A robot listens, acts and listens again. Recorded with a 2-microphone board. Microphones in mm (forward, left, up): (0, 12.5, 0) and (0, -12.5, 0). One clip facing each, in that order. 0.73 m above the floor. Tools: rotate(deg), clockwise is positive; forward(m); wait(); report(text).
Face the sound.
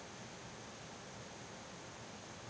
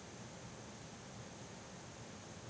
wait()
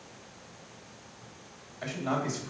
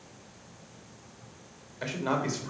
rotate(35)
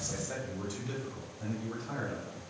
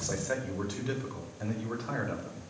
rotate(125)
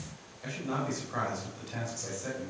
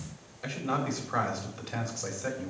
rotate(30)
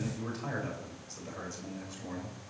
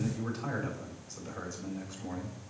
report("Found it: a man speaking, straight ahead, over 4 m away.")